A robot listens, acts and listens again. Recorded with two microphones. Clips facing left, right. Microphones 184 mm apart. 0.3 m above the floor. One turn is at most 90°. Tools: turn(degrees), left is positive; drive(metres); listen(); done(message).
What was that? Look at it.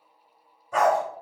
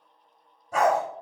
turn(degrees=-40)
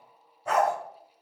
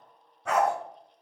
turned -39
turn(degrees=-90)
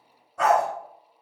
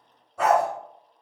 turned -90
turn(degrees=-10)
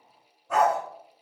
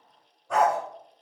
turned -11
done("Found it: a dog barking, straight ahead.")